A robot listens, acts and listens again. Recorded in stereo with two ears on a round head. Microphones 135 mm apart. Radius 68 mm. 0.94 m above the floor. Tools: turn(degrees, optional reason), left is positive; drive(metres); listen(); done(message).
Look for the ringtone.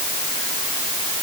listen()
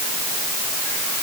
listen()
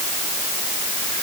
done("I can't make out a ringtone to turn to.")